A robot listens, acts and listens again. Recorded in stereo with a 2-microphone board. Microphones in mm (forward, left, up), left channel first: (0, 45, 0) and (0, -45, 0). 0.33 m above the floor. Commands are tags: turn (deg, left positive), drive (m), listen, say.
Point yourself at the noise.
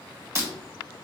<turn deg="-30"/>
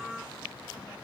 <listen/>
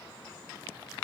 <say>I heard breaking glass, but can't make it out now. It was about straight ahead or 120° right.</say>